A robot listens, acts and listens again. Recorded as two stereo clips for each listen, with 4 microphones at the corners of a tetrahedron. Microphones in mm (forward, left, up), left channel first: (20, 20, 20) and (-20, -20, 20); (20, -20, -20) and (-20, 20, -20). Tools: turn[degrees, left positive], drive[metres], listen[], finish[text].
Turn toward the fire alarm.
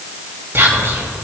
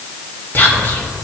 Action: listen[]
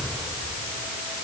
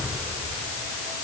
Action: listen[]
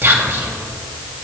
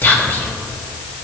Action: finish[I can't make out a fire alarm to turn to.]